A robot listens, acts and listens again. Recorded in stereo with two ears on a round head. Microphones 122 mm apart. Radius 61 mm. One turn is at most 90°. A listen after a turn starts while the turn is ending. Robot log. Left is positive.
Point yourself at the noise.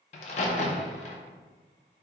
note: The crack: about 50° left or 130° left.
cmd yaw +50
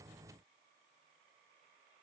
cmd idle
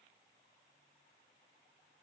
end: I heard a crack, but can't make it out now. It was about straight ahead or 80° left.